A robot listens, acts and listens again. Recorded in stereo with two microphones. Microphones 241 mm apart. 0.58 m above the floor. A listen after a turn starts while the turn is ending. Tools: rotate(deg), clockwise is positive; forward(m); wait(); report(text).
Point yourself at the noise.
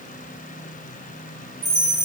rotate(65)
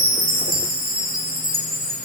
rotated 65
rotate(40)
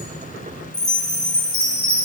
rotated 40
report("Found it: a chime, straight ahead, 1 to 2 m away.")